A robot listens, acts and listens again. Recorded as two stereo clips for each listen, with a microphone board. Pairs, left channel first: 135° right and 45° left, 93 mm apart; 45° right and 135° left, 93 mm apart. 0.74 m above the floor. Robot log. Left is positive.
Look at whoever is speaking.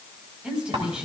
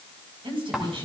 note: The woman speaking: 125° left.
cmd yaw +125
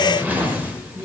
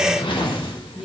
note: The woman speaking is now 50° left.
cmd yaw +50
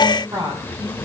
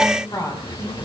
end: Found it: a woman speaking, straight ahead.